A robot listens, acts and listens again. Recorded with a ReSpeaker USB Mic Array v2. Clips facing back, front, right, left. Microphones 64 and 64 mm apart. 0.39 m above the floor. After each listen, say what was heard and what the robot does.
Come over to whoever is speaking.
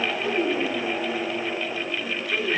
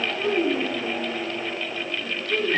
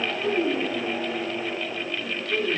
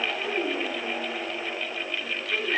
The child speaking: 10° left. Turn 10° left.
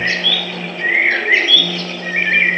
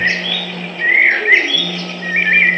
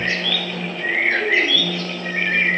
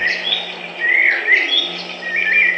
Keep listening.
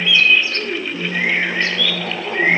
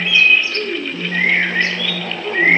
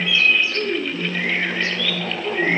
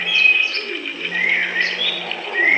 Drive 1.0 m forward.
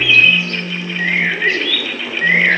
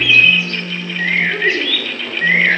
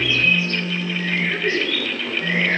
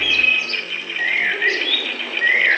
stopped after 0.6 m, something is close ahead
Keep listening.
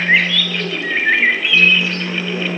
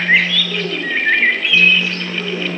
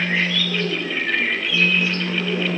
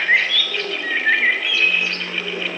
Keep listening.
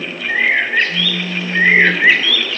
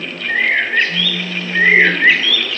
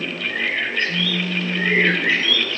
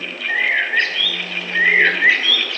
I heard a child speaking from this way, but can't make it out now. I did not reach it.